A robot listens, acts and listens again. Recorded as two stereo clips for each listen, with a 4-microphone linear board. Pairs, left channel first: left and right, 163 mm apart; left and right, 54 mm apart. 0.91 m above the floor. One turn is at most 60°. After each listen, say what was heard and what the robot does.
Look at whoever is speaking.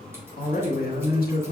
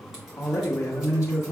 The man speaking: about 70° left or 110° left. Turn 60° left.
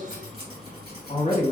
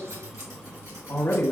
So it is at 45° left. Turn 45° left.
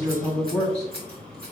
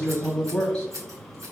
Facing the man speaking.